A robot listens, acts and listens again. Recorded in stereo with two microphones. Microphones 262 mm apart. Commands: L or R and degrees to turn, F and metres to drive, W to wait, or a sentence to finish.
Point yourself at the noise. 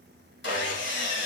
L45
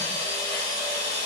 L85
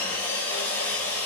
Facing the sawing.